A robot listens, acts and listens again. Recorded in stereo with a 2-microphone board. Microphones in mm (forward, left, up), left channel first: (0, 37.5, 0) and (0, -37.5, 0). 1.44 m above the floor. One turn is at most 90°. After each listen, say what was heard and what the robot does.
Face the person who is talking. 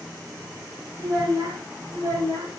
The child speaking: about 55° right or 125° right. Turn 55° right.
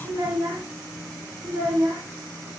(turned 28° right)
So it is at 95° right. Turn 90° right.
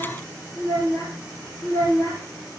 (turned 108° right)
The child speaking is now 35° left. Turn 35° left.
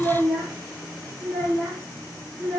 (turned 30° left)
Facing the child speaking, 2 to 4 m away.